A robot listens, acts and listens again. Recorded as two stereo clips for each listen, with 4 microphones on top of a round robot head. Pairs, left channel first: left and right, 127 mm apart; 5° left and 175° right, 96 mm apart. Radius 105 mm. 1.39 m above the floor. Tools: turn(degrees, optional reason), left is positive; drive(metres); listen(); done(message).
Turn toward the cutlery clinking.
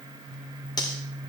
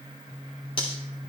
turn(degrees=35, reason="The cutlery clinking: 35° left.")
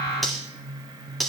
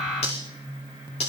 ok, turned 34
done("Facing the cutlery clinking.")